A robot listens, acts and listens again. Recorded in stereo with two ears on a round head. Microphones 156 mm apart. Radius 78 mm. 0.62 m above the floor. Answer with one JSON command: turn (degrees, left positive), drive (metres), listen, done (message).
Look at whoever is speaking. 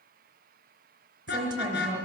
{"turn": -25}
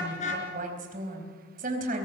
{"turn": -125}
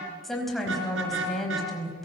{"done": "Found it: a woman speaking, straight ahead, over 4 m away."}